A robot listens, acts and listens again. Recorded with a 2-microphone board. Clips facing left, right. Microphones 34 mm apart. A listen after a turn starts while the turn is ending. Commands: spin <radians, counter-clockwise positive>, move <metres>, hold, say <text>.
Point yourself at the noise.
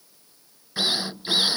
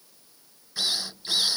spin 0.35
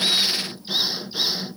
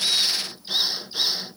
say Found it: a drill, straight ahead.